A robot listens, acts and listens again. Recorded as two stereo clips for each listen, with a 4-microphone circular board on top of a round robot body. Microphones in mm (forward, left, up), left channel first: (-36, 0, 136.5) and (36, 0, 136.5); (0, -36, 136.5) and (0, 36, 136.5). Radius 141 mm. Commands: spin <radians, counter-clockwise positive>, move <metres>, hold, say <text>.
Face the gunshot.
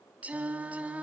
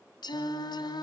hold
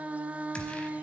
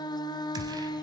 spin 1.83
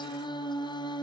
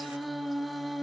say I heard a gunshot from this way, but can't make it out now.